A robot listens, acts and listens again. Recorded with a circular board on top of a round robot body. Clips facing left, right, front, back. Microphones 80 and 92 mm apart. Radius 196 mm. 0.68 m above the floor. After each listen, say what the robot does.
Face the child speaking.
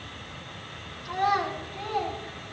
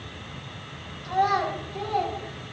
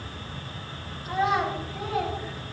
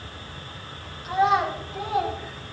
Turn 110° right.
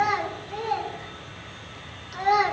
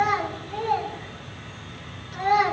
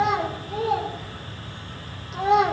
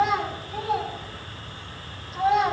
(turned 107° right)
Turn 15° left.
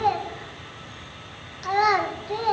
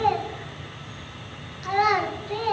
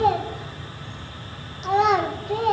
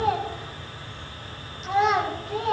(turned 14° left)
Turn 20° left.
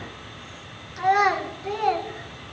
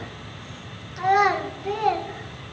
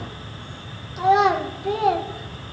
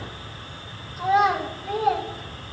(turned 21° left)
Found it: a child speaking, straight ahead.